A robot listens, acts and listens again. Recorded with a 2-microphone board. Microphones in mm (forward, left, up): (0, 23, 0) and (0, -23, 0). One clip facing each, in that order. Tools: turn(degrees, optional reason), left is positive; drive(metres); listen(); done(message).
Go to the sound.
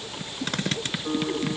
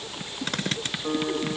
turn(degrees=-35, reason="The guitar: about 35° right or 145° right.")
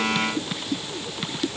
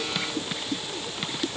listen()
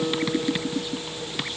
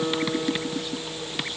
drive(metres=1.0)
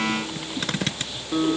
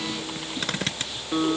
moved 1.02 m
turn(degrees=-10, reason="The guitar is now 10° right.")
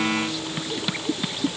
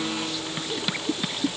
listen()
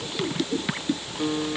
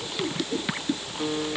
drive(metres=1.0)
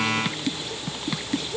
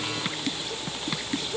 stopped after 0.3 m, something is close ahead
listen()
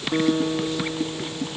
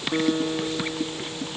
done("I am next to the guitar.")